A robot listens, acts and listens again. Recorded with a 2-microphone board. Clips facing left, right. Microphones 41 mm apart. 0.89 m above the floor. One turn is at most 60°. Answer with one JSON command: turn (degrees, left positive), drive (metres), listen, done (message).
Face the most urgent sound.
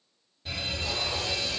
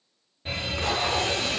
{"turn": -35}
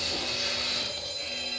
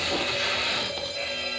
{"turn": -60}
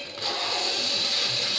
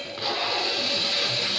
{"turn": -60}
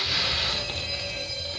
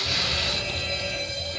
{"turn": -45}
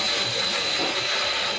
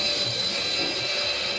{"listen": true}
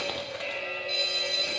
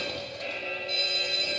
{"turn": 15}
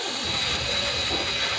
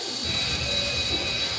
{"done": "Found it: a fire alarm, straight ahead."}